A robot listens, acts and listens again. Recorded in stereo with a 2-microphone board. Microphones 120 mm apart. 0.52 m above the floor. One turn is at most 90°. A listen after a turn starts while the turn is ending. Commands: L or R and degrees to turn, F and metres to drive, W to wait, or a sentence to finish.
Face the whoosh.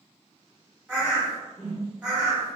L30
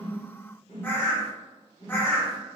L90
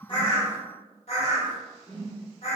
L70
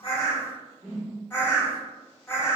R25
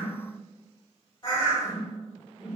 R10
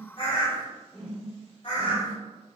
Facing the whoosh.